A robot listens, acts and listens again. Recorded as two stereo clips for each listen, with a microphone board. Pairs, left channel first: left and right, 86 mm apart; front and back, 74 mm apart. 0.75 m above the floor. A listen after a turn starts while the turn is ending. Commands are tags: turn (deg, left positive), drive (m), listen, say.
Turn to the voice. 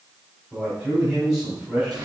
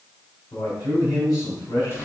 <turn deg="-10"/>
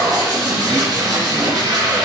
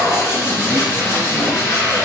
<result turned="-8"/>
<listen/>
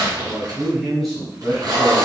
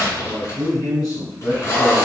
<say>Found it: a man speaking, straight ahead, 2 to 4 m away.</say>